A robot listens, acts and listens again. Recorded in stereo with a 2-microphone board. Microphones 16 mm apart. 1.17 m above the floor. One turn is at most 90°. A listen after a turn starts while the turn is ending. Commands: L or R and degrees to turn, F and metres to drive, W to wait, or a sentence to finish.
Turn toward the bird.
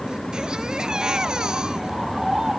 R30
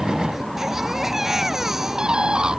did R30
R90
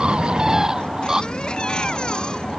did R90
R40
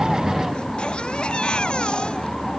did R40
W
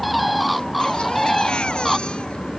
Found it: a bird, straight ahead.